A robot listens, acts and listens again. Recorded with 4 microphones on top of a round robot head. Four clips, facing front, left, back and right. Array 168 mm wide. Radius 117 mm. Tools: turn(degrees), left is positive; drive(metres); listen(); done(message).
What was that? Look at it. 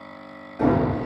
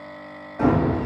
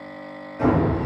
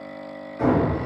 turn(degrees=65)
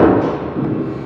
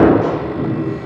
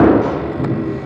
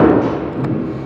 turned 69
done("Found it: hammering, straight ahead, 1 to 2 m away.")